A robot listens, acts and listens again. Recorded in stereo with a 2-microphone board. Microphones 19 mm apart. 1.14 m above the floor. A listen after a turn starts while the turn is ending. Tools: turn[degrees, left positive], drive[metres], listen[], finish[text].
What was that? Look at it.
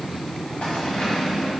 Thought: The keys jangling: about 70° left or 110° left.
Action: turn[70]
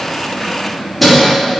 Action: finish[Found it: keys jangling, straight ahead.]